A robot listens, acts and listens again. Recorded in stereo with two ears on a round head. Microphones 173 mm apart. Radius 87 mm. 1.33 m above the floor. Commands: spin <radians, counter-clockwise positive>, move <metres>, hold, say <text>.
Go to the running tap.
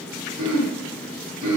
hold
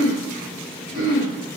hold
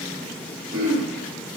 say I can't make out a running tap, only throat clearing.